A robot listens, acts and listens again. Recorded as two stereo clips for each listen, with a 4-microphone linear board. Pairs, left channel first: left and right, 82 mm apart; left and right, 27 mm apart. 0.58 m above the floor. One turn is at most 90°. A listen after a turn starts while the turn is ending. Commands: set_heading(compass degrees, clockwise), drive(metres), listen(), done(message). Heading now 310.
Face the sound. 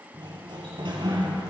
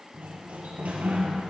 set_heading(20)
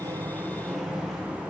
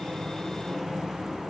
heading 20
done("Facing the sliding door, 2 to 4 m away.")